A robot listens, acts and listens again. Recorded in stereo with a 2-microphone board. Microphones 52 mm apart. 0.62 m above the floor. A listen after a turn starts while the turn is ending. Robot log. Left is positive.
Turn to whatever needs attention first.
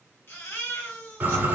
note: The baby crying: about 50° left or 130° left.
cmd yaw +50
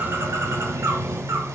cmd idle
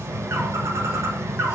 cmd idle
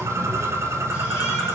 end: I heard a baby crying, but can't make it out now. It was about straight ahead or 80° left.